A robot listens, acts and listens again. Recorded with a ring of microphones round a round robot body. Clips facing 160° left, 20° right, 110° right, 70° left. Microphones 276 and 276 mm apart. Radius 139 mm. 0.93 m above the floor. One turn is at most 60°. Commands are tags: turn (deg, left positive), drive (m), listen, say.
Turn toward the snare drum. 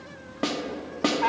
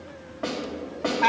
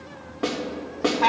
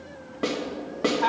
<turn deg="60"/>
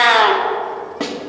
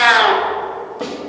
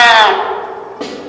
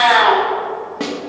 <turn deg="60"/>
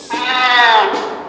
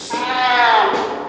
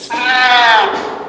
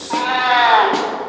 <turn deg="55"/>
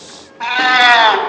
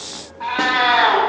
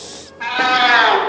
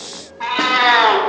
<listen/>
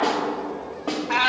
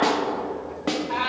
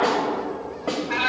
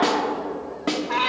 <turn deg="20"/>
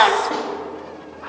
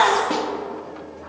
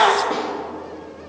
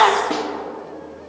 <listen/>
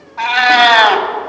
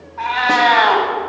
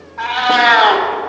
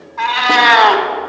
<listen/>
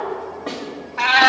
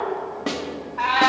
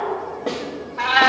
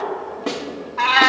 <say>Facing the snare drum, 1 to 2 m away.</say>